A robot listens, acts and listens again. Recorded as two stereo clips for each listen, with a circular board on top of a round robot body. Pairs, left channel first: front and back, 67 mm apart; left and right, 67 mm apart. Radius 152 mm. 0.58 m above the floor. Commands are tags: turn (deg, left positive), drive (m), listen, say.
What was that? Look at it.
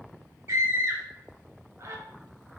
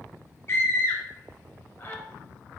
<turn deg="140"/>
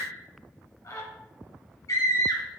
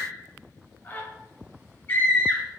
<turn deg="30"/>
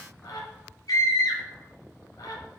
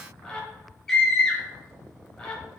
<turn deg="10"/>
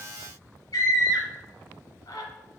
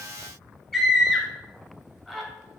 <say>Facing the scream, 1 to 2 m away.</say>